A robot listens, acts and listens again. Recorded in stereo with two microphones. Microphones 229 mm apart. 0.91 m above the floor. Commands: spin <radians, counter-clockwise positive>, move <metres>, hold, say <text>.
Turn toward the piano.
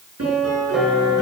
spin -1.57
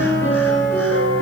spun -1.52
spin 0.17
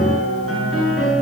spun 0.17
say Found it: a piano, straight ahead, over 4 m away.